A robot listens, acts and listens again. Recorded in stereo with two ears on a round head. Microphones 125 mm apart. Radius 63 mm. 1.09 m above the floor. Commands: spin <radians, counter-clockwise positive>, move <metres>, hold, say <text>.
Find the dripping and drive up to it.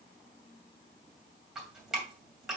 spin -0.52
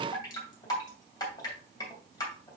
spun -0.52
spin 0.52
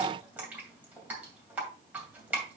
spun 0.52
spin -0.17
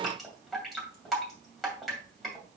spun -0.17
move 1.0
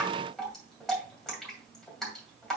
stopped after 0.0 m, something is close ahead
say Something is in my way. I am facing the dripping but have not reached it.